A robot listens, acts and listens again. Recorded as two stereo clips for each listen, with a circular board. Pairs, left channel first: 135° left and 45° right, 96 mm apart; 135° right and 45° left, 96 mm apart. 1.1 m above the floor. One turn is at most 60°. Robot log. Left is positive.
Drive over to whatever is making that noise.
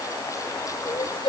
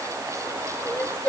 note: The crying: 145° left.
cmd yaw +60
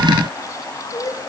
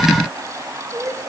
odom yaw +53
note: The crying is now 90° left.
cmd yaw +60
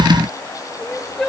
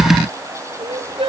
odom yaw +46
note: The crying is now 45° left.
cmd yaw +45
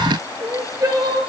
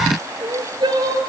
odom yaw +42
cmd fwd 1.0
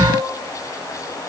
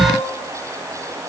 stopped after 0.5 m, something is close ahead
cmd idle
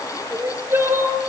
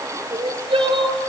note: The crying is now 15° left.
cmd yaw +15
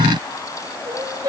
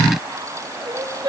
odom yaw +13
end: Blocked. The crying is further on, straight ahead.